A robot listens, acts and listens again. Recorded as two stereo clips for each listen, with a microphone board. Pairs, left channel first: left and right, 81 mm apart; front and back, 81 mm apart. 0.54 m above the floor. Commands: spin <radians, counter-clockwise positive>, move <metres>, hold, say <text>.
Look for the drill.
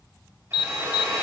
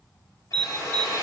spin -0.61
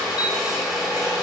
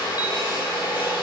say Found it: a drill, straight ahead.